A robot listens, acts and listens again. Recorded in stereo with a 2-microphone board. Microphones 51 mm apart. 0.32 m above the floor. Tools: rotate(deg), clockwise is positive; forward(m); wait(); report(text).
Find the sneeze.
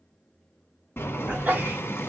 rotate(35)
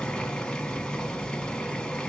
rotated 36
wait()
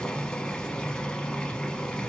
report("I heard a sneeze, but can't make it out now. It was about straight ahead or 110° right.")